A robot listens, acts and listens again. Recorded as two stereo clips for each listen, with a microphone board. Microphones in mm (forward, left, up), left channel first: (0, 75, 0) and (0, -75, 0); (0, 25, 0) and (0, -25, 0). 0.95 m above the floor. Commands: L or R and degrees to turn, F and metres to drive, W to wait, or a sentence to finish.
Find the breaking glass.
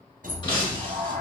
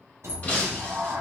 L30
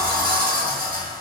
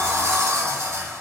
W
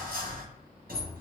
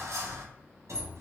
I heard breaking glass, but can't make it out now. It was about straight ahead or 120° left.